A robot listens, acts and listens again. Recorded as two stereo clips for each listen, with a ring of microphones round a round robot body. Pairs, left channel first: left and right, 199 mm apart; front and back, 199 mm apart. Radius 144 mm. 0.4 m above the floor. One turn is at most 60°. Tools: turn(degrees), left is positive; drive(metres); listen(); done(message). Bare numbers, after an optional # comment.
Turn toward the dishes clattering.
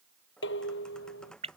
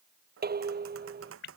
# The dishes clattering: 140° left.
turn(60)
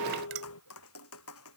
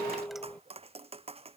# The dishes clattering is now 85° left.
turn(60)
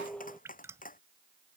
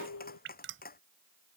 done("Found it: dishes clattering, straight ahead.")